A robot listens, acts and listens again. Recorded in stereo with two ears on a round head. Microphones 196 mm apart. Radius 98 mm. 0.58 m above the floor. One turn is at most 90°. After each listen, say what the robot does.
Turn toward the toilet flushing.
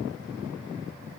Keep listening.
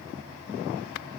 Keep listening.
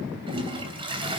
Turn 25° right.
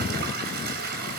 Turn 90° right.
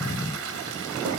Turn 70° right.
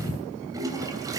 Turn 15° right.
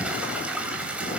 Found it: a toilet flushing, straight ahead.